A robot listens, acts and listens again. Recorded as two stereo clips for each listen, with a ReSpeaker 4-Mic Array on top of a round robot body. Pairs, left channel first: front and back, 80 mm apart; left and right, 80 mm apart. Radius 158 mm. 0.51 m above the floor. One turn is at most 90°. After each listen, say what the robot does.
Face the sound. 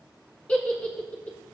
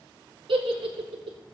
Turn 75° right.
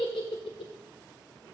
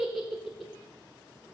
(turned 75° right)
Found it: a giggle, straight ahead.